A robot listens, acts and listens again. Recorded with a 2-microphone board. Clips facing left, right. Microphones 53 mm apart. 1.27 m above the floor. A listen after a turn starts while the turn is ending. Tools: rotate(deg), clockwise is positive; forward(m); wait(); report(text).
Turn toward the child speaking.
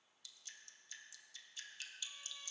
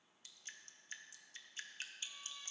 wait()
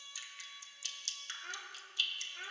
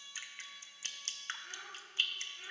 rotate(-65)
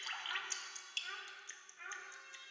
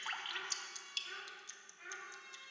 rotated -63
rotate(-35)
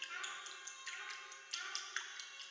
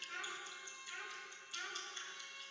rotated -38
rotate(10)
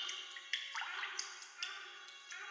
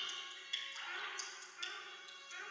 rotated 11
report("Facing the child speaking.")